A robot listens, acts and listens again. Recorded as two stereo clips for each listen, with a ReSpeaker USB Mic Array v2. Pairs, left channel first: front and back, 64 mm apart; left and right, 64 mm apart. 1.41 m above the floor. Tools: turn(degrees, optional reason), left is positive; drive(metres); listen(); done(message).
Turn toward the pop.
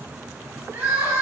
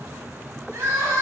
listen()
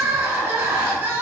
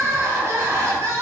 listen()
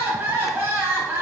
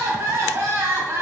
done("I can't make out a pop to turn to.")